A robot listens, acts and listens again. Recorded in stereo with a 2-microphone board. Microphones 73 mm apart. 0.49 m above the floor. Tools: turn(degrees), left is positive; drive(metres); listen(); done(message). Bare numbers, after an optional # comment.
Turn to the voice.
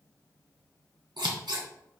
listen()
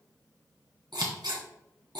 listen()
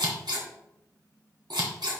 done("I can't make out anyone speaking, only scissors.")